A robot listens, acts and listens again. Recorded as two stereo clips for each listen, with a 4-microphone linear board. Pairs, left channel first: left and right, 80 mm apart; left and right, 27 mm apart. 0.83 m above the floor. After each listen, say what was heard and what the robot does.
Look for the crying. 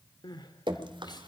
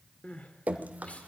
The crying: about 60° left or 120° left. Turn 60° left.
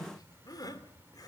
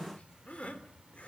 So it is at 55° left. Turn 55° left.
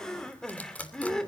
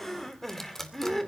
The crying is now 10° left. Turn 10° left.
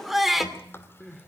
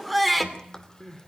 Found it: crying, straight ahead.